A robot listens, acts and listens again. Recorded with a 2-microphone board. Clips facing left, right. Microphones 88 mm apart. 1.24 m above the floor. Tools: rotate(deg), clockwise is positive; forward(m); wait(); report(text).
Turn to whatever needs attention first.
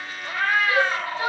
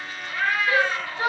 rotate(50)
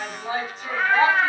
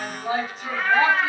report("Found it: a shout, straight ahead, 1 to 2 m away.")